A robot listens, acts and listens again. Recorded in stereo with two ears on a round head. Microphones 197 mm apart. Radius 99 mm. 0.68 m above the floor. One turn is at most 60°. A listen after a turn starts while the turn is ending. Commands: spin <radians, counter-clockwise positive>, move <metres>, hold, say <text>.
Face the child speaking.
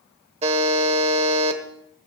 hold
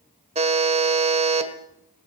hold
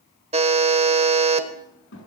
spin 0.96
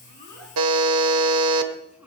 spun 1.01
say Found it: a child speaking, straight ahead, over 4 m away.